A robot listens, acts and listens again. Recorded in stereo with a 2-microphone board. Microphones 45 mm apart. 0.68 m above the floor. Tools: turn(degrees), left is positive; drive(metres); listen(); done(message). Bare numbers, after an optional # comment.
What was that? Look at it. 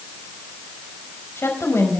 # The woman speaking: about 75° left or 105° left.
turn(75)
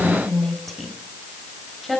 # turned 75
done("Found it: a woman speaking, straight ahead, over 4 m away.")